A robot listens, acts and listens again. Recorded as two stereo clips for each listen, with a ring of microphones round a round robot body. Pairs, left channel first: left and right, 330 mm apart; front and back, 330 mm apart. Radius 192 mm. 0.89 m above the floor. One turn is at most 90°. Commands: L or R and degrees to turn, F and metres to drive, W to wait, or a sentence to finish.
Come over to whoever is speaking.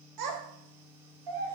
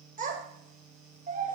R90
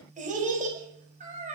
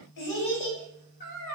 R25
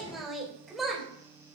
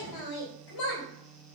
F1.0
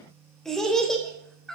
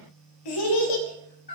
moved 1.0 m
F1.0
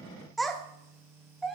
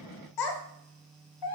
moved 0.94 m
F1.0
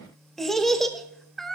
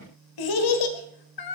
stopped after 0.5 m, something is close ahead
Arrived at the child speaking, straight ahead.